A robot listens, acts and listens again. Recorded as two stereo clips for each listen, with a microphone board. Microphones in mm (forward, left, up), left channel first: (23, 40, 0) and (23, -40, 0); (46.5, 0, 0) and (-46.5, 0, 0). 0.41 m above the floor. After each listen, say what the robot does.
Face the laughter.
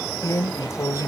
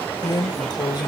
Keep listening.
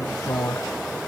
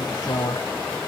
Keep listening.
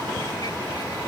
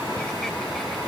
I can't make out laughter, only a drawer.